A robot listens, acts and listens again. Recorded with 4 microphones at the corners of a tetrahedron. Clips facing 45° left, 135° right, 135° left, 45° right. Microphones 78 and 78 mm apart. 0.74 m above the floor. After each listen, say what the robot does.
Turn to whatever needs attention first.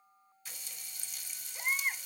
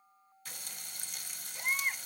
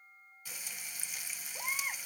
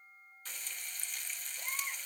Turn 130° left.
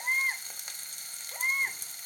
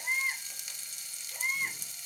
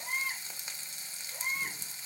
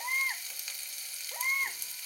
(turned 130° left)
Turn 10° right.
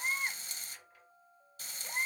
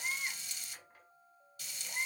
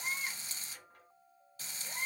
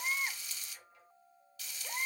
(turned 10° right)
Facing the baby crying.